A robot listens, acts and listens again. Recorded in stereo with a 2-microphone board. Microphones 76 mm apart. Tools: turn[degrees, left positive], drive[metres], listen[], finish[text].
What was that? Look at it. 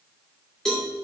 Action: turn[30]
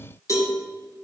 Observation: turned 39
Thought: So it is at 135° left.
Action: turn[135]
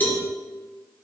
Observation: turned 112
Thought: The cowbell is now 20° left.
Action: turn[20]
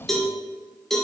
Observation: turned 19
Action: finish[Facing the cowbell.]